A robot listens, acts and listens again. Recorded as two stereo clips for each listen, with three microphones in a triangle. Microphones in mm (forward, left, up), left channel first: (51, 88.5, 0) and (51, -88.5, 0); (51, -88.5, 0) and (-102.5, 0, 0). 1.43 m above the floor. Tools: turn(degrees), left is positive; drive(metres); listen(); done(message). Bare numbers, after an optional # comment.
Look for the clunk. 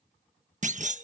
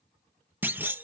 # The clunk: 130° right.
turn(-130)
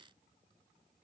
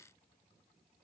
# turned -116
# Nothing new. It was at 15° right.
turn(-15)
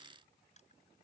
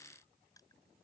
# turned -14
done("Facing where the clunk came from. I can't hear it now.")